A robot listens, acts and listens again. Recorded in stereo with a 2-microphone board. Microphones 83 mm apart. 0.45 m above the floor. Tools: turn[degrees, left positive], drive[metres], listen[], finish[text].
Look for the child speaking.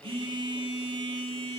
Action: listen[]
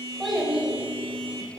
Action: turn[-30]
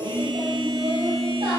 Thought: So it is at 120° right.
Action: turn[-120]
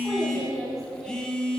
Action: finish[Found it: a child speaking, straight ahead, 2 to 4 m away.]